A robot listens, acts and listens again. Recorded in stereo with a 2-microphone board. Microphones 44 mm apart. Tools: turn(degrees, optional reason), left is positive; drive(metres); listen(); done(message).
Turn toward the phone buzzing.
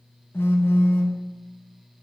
turn(degrees=65, reason="The phone buzzing: about 65° left or 115° left.")
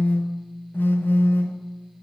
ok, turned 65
turn(degrees=50, reason="So it is at 50° left.")
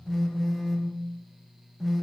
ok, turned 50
done("Facing the phone buzzing, under 1 m away.")